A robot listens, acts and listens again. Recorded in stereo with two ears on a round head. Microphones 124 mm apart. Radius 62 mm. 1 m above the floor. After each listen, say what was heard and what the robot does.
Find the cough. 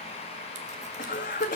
The cough: about 60° left or 120° left. Turn 60° left.
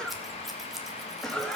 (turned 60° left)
Found it: a cough, straight ahead.